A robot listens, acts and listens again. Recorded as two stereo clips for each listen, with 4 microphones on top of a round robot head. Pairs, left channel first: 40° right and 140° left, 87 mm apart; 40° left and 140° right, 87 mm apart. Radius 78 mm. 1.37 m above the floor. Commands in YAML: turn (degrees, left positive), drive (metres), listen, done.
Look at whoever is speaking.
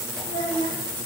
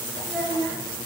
turn: -60
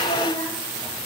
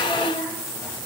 listen: true
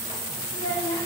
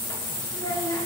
turn: -15
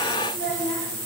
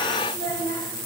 done: "Found it: a child speaking, straight ahead, over 4 m away."